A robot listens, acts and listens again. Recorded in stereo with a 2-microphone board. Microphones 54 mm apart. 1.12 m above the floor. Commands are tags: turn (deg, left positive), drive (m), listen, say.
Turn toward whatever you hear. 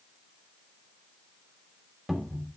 <turn deg="-30"/>
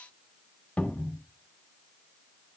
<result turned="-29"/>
<turn deg="25"/>
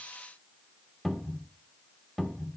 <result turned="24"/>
<say>Found it: a cupboard door, straight ahead.</say>